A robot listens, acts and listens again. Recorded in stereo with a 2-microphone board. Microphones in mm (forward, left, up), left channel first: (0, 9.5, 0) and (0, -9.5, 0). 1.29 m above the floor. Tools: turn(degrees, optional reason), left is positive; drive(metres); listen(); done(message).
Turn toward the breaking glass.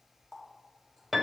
listen()
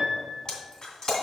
turn(degrees=45, reason="The breaking glass: about 45° left or 135° left.")
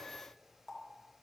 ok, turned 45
listen()
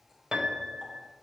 done("I heard breaking glass, but can't make it out now. It was about straight ahead or 90° left.")